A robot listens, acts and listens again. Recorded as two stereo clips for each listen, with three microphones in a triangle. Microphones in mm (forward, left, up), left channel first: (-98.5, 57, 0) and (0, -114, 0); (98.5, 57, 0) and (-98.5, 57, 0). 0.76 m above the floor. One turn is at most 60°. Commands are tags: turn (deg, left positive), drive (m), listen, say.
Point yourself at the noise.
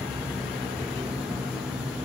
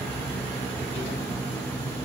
<listen/>
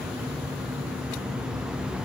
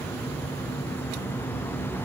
<listen/>
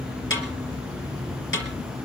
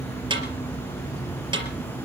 <turn deg="60"/>
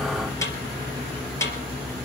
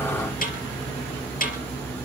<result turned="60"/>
<turn deg="45"/>
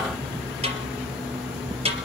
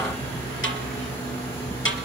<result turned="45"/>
<say>Found it: a snare drum, straight ahead.</say>